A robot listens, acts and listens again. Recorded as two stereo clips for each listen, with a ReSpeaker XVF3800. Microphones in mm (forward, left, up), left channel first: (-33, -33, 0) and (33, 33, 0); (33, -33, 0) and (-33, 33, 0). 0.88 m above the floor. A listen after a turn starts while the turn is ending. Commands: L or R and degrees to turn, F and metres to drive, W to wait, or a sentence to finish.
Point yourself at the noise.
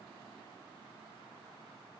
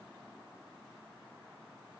W
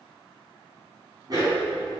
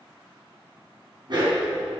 L95
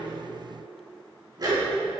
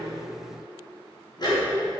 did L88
Found it: a dog barking, straight ahead, over 4 m away.